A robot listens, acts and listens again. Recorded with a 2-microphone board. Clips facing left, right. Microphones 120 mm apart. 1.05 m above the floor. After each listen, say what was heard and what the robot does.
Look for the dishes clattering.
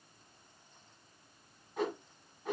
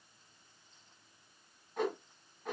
Keep listening.
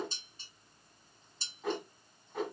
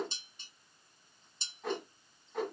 The dishes clattering: about 35° left or 145° left. Turn 35° left.
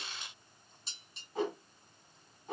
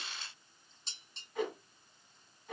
Found it: dishes clattering, straight ahead, 2 to 4 m away.